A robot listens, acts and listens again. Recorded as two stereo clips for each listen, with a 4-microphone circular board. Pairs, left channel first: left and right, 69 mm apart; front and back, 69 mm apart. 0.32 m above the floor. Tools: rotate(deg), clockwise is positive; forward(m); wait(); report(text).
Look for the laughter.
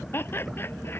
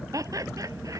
rotate(-145)
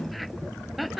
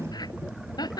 report("Facing the laughter.")